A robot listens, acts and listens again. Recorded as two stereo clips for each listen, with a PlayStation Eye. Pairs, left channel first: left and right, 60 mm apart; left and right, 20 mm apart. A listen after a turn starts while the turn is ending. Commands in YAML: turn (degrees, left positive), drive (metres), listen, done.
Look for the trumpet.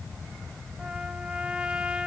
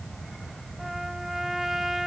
turn: -15
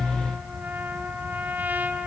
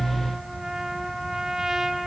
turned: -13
turn: -155
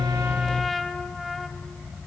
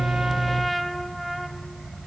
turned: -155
done: "Facing the trumpet."